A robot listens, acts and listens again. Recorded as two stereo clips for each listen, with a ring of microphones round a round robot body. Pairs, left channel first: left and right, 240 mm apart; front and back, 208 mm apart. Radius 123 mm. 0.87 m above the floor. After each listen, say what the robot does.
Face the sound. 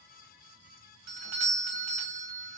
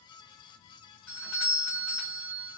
Turn 80° right.
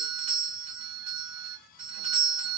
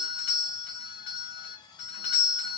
Turn 25° right.
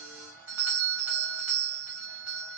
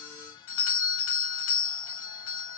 Turn 10° right.
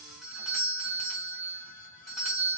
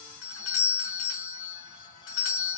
Found it: a doorbell, straight ahead.